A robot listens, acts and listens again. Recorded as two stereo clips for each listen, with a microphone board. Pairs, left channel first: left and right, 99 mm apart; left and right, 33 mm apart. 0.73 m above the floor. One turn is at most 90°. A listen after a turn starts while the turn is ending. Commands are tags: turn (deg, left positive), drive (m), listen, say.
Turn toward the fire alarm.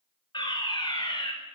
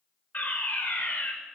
<turn deg="50"/>
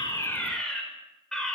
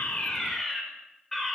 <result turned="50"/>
<turn deg="10"/>
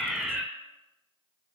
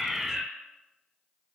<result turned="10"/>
<say>Found it: a fire alarm, straight ahead.</say>